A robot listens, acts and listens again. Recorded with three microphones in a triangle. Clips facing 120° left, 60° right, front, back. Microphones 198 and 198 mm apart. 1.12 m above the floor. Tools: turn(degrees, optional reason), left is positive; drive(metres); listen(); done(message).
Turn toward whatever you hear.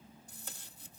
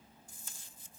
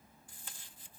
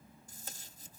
turn(degrees=135, reason="The tape being pulled: 135° left.")
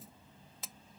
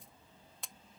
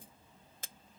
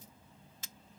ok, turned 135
turn(degrees=30, reason="The tape being pulled is now 30° left.")
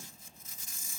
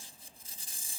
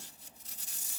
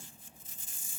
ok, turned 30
done("Facing the tape being pulled.")